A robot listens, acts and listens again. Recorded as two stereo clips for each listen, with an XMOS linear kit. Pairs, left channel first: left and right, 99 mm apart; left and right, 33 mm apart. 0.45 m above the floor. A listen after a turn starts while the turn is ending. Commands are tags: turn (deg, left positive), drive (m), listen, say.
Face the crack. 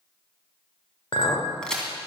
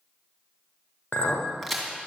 <turn deg="30"/>
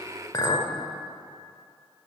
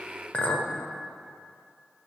<listen/>
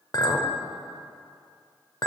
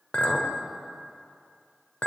<say>I heard a crack, but can't make it out now. It was about 20° right or 140° left.</say>